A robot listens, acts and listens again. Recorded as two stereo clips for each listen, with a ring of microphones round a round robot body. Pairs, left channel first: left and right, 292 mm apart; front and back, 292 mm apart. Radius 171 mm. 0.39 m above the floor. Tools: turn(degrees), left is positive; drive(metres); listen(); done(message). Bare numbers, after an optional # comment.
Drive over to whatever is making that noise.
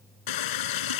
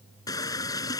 # The running tap: 80° left.
turn(80)
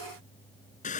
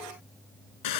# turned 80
# The running tap is now 20° left.
turn(20)
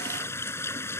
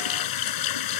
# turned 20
# The running tap is now 10° left.
turn(10)
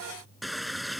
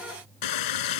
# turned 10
drive(1.0)
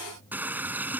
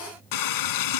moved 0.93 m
drive(1.0)
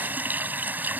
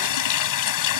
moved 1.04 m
drive(1.0)
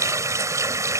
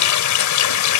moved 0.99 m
# The running tap is now 10° right.
turn(-10)
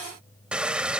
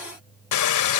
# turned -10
drive(1.0)
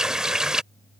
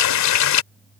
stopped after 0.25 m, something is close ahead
done("Arrived at the running tap, straight ahead.")